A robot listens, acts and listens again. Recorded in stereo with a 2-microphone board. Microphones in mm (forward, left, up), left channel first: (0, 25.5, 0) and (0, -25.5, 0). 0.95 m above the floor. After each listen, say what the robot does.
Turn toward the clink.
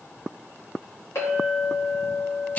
Turn 90° left.
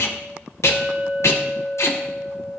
Found it: a clink, straight ahead.